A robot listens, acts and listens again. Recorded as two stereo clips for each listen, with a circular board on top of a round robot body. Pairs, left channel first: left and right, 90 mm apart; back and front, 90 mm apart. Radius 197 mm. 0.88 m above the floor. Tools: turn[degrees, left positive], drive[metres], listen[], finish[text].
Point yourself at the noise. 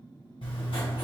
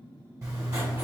Thought: The writing: 60° left.
Action: turn[60]
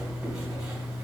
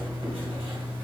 Thought: The writing is now 25° right.
Action: turn[-25]
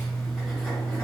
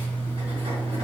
Thought: The writing is now 10° left.
Action: turn[10]
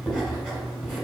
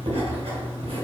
Action: finish[Found it: writing, straight ahead, 1 to 2 m away.]